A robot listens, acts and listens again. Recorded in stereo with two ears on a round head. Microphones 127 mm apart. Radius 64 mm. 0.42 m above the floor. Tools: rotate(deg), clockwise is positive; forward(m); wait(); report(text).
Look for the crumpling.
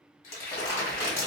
rotate(-50)
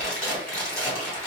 rotate(-10)
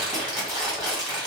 report("Facing the crumpling, 2 to 4 m away.")